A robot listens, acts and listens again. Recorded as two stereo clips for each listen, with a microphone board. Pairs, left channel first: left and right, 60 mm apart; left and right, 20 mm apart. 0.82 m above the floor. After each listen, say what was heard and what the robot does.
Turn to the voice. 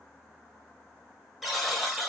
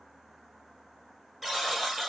Keep listening.
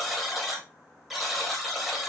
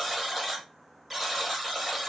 Keep listening.
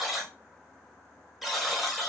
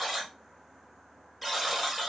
I can't make out anyone speaking, only a buzzer.